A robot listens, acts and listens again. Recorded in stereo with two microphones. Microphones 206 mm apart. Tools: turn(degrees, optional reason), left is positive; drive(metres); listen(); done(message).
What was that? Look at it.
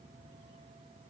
listen()
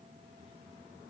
listen()
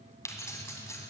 turn(degrees=30)
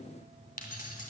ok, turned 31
turn(degrees=135, reason="So it is at 135° left.")
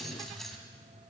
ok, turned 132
done("Found it: keys jangling, straight ahead.")